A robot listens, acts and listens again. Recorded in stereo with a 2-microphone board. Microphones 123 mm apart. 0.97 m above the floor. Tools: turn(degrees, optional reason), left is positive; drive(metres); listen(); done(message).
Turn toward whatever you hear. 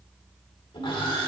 turn(degrees=45, reason="The sawing: about 45° left or 135° left.")
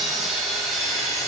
done("Found it: sawing, straight ahead.")